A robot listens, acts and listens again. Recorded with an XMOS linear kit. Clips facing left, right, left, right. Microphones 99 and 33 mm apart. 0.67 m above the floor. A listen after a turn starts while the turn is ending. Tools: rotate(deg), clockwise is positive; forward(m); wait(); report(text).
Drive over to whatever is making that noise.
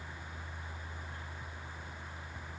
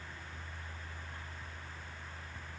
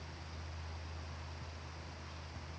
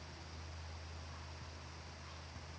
wait()
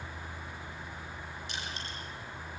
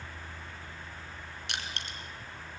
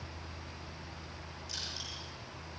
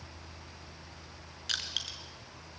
rotate(75)
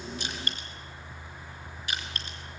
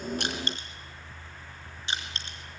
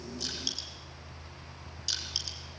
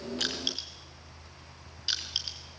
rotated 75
rotate(25)
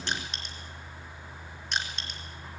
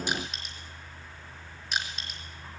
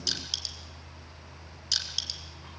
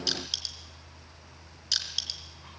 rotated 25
forward(1.0)
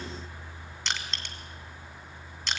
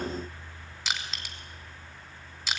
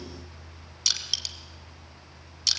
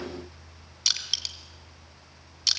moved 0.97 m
forward(1.0)
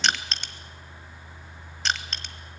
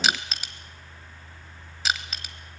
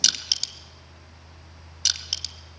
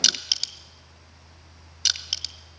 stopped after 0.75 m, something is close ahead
report("Arrived at the crushing, straight ahead.")